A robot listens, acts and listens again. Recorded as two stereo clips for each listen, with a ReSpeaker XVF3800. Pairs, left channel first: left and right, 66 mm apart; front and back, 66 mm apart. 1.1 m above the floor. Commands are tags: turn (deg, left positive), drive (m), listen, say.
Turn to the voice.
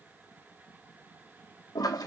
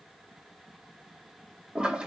<listen/>
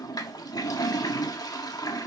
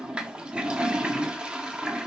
<listen/>
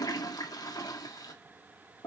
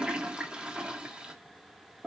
<say>I can't make out anyone speaking to turn to.</say>